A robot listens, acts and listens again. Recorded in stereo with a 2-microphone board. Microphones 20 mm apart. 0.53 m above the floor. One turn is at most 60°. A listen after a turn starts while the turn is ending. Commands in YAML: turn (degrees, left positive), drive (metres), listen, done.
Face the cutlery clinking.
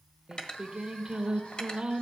turn: 50
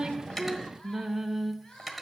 done: "Facing the cutlery clinking."